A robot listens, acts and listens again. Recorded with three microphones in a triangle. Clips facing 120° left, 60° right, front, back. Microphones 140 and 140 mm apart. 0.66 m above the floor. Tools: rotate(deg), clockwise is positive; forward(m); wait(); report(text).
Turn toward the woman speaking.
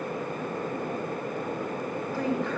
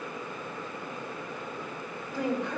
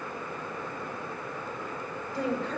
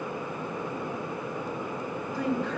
rotate(-10)
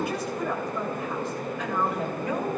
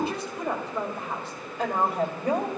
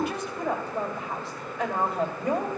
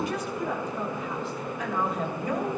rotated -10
rotate(10)
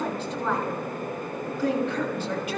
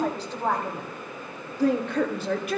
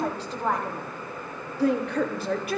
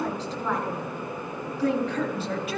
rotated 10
rotate(25)
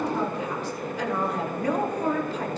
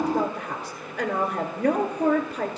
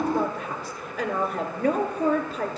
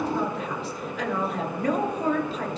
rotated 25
rotate(30)
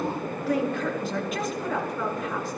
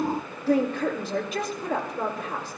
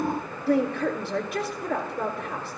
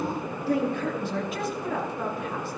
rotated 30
report("Facing the woman speaking.")